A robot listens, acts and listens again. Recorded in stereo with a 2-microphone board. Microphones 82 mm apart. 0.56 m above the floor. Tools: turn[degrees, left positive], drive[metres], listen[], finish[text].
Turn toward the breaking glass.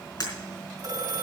Thought: The breaking glass: about 45° left or 135° left.
Action: turn[45]
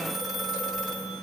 Action: listen[]
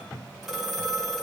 Action: finish[I heard breaking glass, but can't make it out now. It was about straight ahead or 90° left.]